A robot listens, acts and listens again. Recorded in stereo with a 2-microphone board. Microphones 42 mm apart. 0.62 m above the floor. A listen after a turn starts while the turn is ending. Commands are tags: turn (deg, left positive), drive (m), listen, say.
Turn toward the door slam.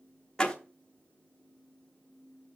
<turn deg="20"/>
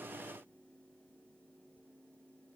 <listen/>
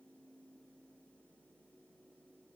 <say>I heard a door slam, but can't make it out now. It was about straight ahead or 140° left.</say>